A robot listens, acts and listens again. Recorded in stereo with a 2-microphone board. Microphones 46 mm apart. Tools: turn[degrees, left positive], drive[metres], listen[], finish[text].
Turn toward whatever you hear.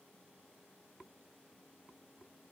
Action: listen[]
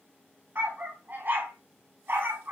Thought: The dog barking: about 60° right or 120° right.
Action: turn[-60]
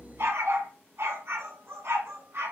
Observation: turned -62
Thought: So it is at 60° right.
Action: turn[-60]
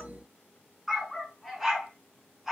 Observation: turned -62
Action: finish[Facing the dog barking.]